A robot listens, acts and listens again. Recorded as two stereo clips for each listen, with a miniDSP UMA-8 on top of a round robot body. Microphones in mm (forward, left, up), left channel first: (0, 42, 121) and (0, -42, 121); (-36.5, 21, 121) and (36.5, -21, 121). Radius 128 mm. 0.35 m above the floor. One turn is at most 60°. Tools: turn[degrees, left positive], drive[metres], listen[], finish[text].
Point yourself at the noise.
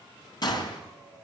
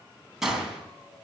Thought: The gunshot: 55° left.
Action: turn[55]
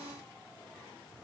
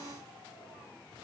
Action: finish[Facing where the gunshot came from. I can't hear it now.]